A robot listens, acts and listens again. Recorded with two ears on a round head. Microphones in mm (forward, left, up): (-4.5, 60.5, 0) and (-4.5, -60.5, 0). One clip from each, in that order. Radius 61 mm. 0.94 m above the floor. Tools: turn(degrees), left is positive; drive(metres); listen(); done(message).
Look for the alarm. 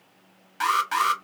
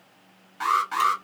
turn(degrees=50)
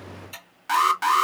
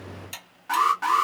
turn(degrees=75)
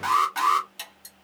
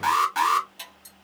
turn(degrees=-10)
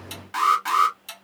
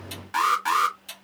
done("Facing the alarm, 1 to 2 m away.")